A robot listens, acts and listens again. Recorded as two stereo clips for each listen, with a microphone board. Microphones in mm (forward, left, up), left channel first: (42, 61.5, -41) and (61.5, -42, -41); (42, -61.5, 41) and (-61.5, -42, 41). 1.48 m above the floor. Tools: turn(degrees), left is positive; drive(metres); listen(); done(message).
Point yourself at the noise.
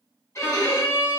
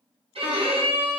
turn(degrees=160)
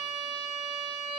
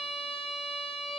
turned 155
done("Found it: a violin, straight ahead.")